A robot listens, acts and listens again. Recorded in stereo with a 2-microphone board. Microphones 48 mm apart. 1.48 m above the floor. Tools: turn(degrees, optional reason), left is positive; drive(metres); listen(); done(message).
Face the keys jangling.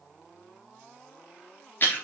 listen()
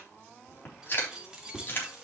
turn(degrees=-30)
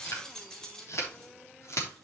turn(degrees=15, reason="So it is at 15° left.")
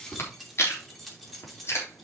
done("Facing the keys jangling.")